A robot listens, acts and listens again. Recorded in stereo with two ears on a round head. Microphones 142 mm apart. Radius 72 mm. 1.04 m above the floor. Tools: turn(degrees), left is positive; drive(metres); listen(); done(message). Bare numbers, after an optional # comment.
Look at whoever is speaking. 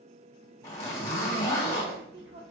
turn(-90)
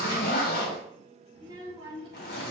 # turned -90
# So it is at 35° right.
turn(-35)
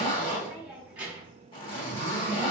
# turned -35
# The child speaking is now 10° right.
turn(-10)
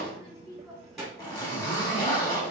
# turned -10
done("Found it: a child speaking, straight ahead.")